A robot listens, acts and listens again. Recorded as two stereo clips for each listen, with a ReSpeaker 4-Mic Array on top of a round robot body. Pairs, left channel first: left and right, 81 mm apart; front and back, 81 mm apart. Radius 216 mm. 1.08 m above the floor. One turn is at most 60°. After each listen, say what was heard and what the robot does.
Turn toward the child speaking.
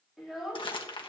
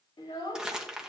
Found it: a child speaking, straight ahead.